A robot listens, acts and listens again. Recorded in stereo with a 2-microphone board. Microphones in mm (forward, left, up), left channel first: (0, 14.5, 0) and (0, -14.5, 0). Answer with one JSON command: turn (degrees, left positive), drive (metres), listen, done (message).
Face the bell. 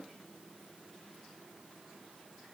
{"listen": true}
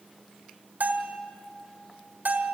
{"turn": -90}
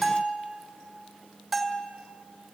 {"done": "Found it: a bell, straight ahead, 1 to 2 m away."}